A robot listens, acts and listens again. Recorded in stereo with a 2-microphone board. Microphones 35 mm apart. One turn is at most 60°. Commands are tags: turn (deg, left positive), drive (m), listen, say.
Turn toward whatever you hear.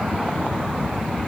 <listen/>
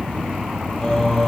<turn deg="25"/>
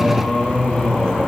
<turn deg="60"/>
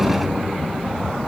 <turn deg="60"/>
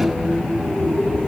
<turn deg="55"/>
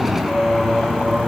<say>Facing the singing.</say>